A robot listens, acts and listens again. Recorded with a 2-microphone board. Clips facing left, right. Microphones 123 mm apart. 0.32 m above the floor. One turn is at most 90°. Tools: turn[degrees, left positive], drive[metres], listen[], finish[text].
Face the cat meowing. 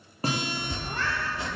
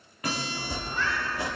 Thought: The cat meowing: about 60° left or 120° left.
Action: turn[60]
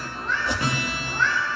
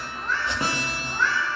Action: finish[Found it: a cat meowing, straight ahead.]